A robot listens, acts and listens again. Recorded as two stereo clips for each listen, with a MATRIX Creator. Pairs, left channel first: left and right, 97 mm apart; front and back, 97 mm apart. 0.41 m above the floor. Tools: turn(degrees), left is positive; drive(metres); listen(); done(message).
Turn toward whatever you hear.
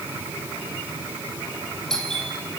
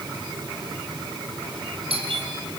turn(degrees=175)
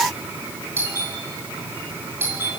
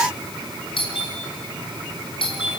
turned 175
turn(degrees=-25)
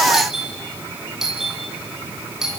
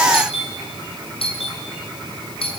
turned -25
done("Found it: a doorbell, straight ahead, over 4 m away.")